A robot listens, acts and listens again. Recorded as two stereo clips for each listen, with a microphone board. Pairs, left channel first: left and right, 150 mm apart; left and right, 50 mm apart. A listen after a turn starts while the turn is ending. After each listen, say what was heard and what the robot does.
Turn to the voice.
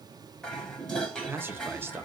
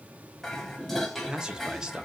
Turn 30° right.
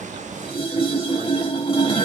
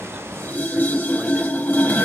Keep listening.
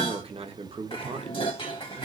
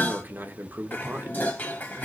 So it is at 135° right. Turn 135° right.
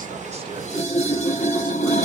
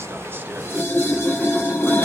Keep listening.
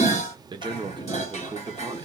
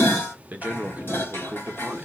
The man speaking is now 35° right. Turn 35° right.
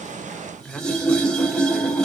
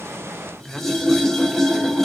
Facing the man speaking, under 1 m away.